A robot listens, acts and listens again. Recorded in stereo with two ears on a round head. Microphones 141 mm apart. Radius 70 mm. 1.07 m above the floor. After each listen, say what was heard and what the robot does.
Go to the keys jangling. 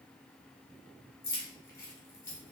The keys jangling: about 20° left or 160° left. Turn 20° left.
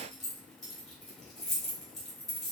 Drive 1.0 m forward.
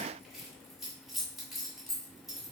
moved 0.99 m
Drive 1.0 m forward.
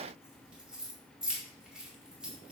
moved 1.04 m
Drive 1.0 m forward.
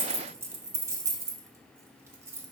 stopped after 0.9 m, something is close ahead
The keys jangling is now 20° right. Turn 20° right.
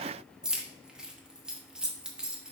I am next to the keys jangling.